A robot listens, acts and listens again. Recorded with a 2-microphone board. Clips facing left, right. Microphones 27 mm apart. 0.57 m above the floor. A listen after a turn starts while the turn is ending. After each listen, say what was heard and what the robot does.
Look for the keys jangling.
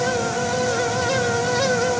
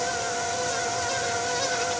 Keep listening.
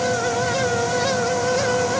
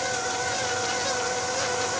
Keep listening.
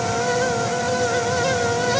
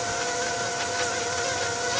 I can't make out keys jangling to turn to.